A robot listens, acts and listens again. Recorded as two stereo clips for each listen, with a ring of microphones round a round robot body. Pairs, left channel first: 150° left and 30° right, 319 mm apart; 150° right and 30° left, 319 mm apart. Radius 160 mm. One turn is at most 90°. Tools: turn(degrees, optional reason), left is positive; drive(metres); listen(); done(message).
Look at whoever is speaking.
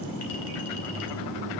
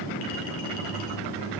listen()
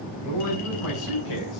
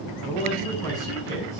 turn(degrees=90, reason="The man speaking: 130° left.")
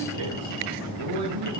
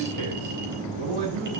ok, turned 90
done("Facing the man speaking, over 4 m away.")